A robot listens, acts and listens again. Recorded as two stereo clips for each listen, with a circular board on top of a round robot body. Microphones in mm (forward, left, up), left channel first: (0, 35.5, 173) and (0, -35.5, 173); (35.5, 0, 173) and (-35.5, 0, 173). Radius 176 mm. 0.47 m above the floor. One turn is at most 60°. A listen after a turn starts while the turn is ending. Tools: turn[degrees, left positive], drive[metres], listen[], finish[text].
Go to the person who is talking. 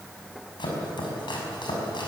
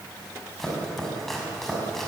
Action: listen[]
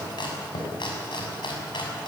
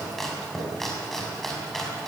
Action: listen[]
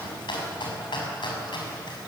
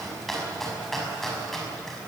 Action: finish[I can't make out anyone speaking to turn to.]